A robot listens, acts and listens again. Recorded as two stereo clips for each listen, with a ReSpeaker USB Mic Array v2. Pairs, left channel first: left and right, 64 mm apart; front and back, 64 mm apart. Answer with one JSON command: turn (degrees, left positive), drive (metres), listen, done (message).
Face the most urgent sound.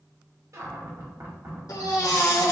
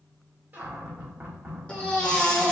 {"turn": 70}
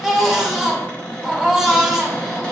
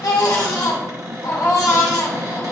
{"done": "Facing the baby crying, under 1 m away."}